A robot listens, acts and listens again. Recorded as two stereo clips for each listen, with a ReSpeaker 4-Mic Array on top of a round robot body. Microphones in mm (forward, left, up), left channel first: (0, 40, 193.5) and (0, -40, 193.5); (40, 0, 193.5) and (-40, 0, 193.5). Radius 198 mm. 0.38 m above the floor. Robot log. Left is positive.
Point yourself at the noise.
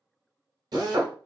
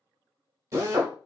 note: The drill: 125° right.
cmd yaw -125
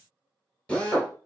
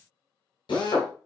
note: The drill is now 15° left.
cmd yaw +15
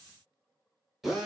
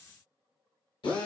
end: Found it: a drill, straight ahead, 1 to 2 m away.